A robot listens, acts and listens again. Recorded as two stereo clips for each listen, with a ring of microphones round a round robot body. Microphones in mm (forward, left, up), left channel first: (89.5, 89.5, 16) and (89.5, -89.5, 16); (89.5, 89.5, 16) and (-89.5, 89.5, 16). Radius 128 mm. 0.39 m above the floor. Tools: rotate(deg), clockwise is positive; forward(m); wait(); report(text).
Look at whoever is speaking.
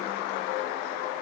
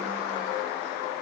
wait()
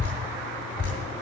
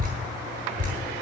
wait()
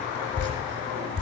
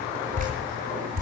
report("I can't make out anyone speaking to turn to.")